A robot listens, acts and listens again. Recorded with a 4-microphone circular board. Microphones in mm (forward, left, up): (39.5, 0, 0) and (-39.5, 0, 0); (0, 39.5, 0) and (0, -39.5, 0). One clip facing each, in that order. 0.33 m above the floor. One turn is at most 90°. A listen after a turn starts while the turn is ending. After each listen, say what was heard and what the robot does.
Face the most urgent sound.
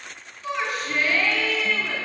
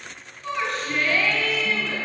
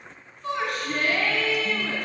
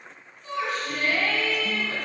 The shout: 85° left. Turn 85° left.
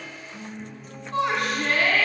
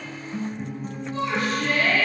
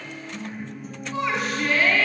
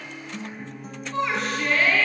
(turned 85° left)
Facing the shout, 2 to 4 m away.